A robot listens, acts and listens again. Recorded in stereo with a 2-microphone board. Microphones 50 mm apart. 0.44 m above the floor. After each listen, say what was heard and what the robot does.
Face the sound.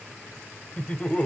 The laughter: about 25° left or 155° left. Turn 25° left.
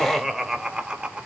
So it is at 20° right. Turn 20° right.
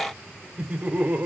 The laughter is now 35° right. Turn 35° right.
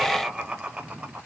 The laughter is now 25° right. Turn 25° right.
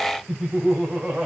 The laughter is now 10° right. Turn 10° right.
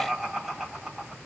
Facing the laughter.